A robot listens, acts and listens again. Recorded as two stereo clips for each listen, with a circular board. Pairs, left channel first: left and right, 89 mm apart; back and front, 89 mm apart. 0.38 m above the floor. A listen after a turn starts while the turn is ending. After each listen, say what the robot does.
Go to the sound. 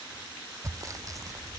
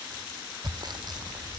Turn 40° right.
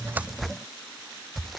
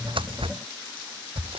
Drive 1.0 m forward.
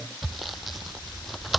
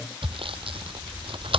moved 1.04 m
Drive 1.0 m forward.
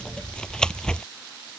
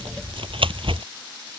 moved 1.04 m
Turn 10° left.
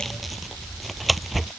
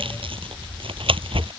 Drive 1.0 m forward.
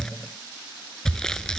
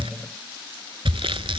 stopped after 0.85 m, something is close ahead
Turn 10° left.
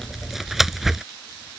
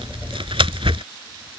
Arrived at the sawing, straight ahead.